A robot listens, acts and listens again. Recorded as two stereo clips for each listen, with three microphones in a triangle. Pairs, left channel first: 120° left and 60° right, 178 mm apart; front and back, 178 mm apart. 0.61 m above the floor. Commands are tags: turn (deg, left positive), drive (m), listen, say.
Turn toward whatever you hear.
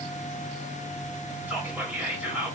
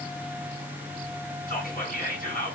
<turn deg="20"/>
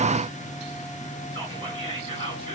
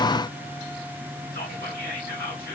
<say>Facing the whispering.</say>